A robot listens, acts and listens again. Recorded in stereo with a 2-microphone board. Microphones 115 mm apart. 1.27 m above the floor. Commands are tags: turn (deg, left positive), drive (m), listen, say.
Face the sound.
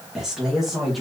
<turn deg="30"/>
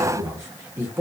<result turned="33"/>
<turn deg="-20"/>
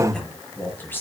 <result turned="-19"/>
<turn deg="20"/>
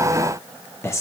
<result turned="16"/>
<turn deg="25"/>
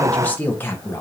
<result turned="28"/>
<turn deg="25"/>
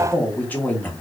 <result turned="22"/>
<turn deg="15"/>
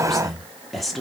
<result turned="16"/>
<say>Found it: a man speaking, straight ahead.</say>